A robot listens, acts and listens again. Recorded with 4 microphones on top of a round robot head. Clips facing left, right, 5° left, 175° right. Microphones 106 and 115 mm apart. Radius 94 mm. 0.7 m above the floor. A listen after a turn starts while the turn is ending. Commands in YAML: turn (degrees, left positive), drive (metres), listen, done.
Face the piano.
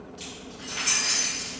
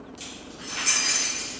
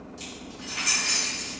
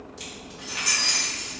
listen: true
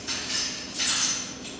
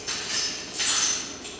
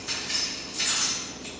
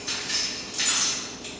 listen: true
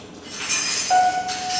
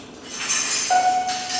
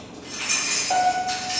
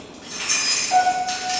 turn: -10
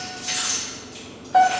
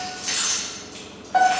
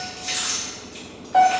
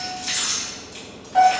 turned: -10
done: "Found it: a piano, straight ahead, under 1 m away."